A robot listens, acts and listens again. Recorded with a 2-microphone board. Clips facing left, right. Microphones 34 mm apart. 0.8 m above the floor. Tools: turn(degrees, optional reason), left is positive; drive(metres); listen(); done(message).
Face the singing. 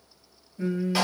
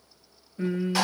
turn(degrees=-40, reason="The singing: about 40° right or 140° right.")
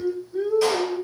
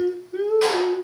turn(degrees=-100, reason="So it is at 100° right.")
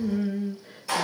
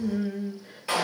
done("Found it: singing, straight ahead, under 1 m away.")